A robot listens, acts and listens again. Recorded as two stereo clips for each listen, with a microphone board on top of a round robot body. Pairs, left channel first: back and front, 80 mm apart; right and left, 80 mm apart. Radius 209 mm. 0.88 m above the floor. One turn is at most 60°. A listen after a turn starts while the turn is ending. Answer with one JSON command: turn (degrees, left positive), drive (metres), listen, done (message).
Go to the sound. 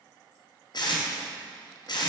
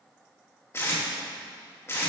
{"turn": -60}
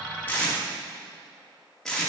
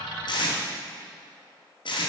{"turn": -60}
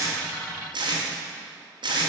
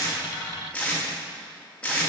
{"turn": -15}
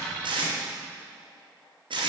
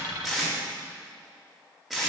{"drive": 1.0}
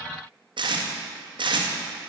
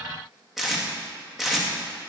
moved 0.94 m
{"drive": 1.0}
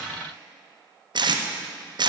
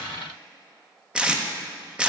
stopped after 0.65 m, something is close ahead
{"turn": 10}
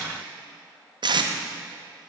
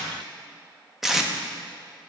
{"done": "Arrived at the tape being pulled, straight ahead."}